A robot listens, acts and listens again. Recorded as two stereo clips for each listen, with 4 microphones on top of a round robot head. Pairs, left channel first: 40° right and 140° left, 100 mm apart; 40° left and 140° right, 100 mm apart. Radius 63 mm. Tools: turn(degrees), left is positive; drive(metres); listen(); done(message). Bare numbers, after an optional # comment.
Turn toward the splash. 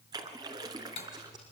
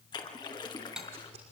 # The splash: 90° left.
turn(90)
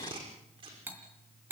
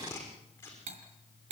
done("Facing where the splash came from. I can't hear it now.")